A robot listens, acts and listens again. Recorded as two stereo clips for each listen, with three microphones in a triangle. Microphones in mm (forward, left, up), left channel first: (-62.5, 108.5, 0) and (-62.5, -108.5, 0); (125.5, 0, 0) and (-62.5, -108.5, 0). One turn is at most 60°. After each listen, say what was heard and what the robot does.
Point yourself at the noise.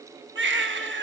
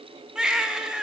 The baby crying: 65° right. Turn 60° right.
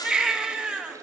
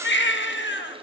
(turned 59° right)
Found it: a baby crying, straight ahead.